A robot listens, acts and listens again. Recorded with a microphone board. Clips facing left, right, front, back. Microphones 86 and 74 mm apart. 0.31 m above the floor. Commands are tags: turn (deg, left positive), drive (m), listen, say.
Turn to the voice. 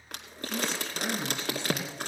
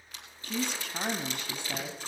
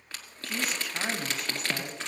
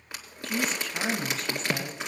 <turn deg="-85"/>
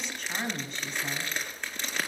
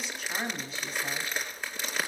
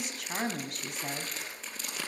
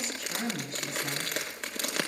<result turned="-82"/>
<say>Facing the woman speaking.</say>